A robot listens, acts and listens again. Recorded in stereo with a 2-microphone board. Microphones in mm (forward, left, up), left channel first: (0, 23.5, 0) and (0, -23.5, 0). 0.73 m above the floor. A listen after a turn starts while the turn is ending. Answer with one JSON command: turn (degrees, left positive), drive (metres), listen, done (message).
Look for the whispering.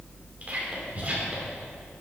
{"turn": -40}
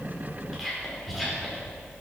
{"done": "Found it: whispering, straight ahead, 2 to 4 m away."}